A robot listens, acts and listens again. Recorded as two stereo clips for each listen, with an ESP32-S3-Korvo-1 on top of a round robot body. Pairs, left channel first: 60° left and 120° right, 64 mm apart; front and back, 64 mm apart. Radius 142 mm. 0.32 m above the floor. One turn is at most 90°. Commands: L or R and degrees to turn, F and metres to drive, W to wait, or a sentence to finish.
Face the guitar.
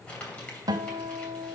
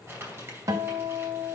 R90
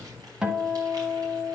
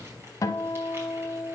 R40
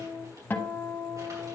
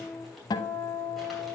Found it: a guitar, straight ahead.